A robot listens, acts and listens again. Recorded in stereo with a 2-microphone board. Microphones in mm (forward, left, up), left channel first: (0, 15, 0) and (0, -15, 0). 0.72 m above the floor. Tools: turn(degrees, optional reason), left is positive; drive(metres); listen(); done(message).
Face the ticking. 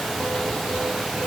listen()
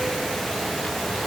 listen()
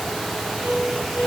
done("I can't make out ticking, only a piano.")